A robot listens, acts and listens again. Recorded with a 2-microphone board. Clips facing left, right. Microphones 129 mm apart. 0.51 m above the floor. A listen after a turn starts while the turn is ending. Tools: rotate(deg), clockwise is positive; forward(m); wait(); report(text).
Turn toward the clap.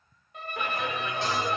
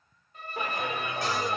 rotate(25)
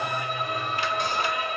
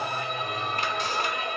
rotate(125)
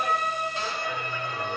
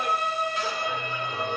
wait()
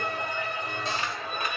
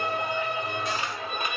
rotate(25)
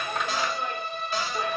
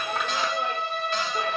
wait()
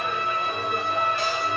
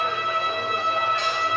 wait()
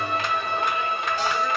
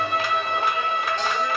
report("Facing where the clap came from. I can't hear it now.")